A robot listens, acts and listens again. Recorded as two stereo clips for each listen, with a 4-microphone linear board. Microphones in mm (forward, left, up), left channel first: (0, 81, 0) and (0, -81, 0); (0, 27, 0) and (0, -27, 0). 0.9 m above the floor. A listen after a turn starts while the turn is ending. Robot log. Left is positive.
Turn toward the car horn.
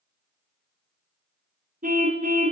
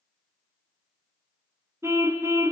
note: The car horn: about 55° right or 125° right.
cmd yaw -55
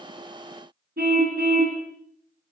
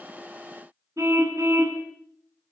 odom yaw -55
note: So it is at 70° right.
cmd yaw -70
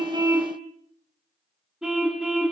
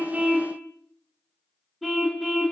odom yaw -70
end: Found it: a car horn, straight ahead.